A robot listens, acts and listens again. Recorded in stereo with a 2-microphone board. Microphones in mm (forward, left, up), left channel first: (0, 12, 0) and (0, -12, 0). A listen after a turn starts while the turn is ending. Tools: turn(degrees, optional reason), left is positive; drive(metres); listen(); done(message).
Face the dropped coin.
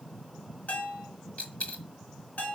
turn(degrees=65, reason="The dropped coin: about 65° left or 115° left.")
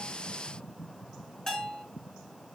listen()
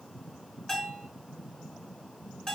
done("I heard a dropped coin, but can't make it out now. It was about straight ahead or 50° left.")